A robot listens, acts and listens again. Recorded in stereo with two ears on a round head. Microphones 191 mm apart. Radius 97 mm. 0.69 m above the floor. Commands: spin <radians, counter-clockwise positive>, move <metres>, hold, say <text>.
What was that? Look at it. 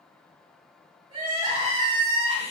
spin -0.52
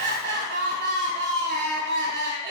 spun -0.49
spin -2.09
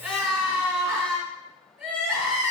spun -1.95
spin -0.17
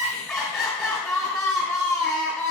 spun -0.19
say Found it: crying, straight ahead, 2 to 4 m away.